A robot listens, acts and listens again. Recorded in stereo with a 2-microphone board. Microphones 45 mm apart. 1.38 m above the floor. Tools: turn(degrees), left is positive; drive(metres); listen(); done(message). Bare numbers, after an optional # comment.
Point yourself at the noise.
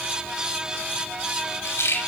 turn(90)
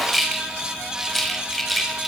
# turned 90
done("Found it: a rattle, straight ahead.")